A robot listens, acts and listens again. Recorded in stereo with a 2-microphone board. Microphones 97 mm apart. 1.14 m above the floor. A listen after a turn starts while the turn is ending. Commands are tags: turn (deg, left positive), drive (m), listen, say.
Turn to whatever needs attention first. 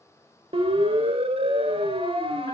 <turn deg="-75"/>
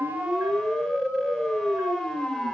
<say>Found it: a siren, straight ahead, 2 to 4 m away.</say>